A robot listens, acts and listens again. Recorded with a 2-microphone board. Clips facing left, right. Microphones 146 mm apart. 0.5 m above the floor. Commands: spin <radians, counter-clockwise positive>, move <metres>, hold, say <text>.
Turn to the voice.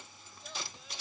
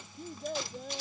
spin -0.79
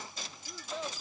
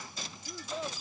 say Found it: a child speaking, straight ahead.